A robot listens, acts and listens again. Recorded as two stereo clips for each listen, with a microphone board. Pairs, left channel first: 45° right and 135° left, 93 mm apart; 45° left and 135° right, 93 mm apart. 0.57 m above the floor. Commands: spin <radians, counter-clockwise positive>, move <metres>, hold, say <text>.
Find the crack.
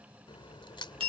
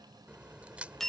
spin -1.05
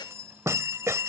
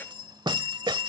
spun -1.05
say Facing where the crack came from. I can't hear it now.